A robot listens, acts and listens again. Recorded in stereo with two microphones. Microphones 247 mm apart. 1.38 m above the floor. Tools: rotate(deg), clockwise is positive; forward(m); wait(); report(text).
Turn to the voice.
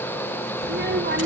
rotate(45)
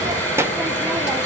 rotate(10)
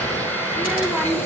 report("Facing the child speaking, 1 to 2 m away.")